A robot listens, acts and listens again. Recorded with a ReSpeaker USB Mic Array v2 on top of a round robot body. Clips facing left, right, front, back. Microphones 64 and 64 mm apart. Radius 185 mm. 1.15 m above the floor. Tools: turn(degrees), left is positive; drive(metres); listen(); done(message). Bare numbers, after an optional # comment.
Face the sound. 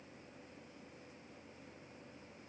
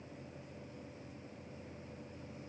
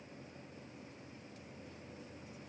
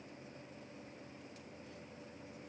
listen()
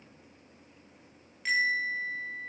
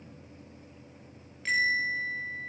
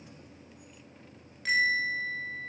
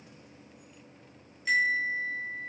# The bell: 15° left.
turn(15)
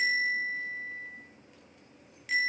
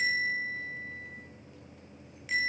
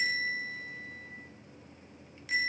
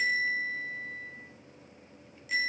done("Facing the bell, over 4 m away.")